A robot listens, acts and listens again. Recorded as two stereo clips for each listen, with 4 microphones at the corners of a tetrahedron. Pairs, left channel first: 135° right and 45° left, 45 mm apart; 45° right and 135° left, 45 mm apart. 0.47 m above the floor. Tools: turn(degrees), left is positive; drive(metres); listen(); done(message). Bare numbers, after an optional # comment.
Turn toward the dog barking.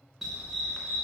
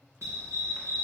# The dog barking: 135° left.
turn(135)
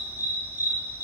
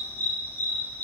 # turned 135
# The dog barking is now 10° left.
turn(10)
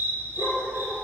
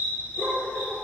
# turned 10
done("Facing the dog barking, 2 to 4 m away.")